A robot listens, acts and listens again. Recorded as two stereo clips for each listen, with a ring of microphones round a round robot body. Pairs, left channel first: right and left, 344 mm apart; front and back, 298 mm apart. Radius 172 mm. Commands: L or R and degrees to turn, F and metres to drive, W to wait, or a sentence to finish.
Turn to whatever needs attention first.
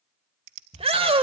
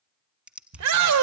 L165
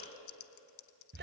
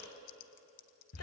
L30
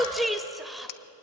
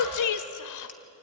Facing the shout.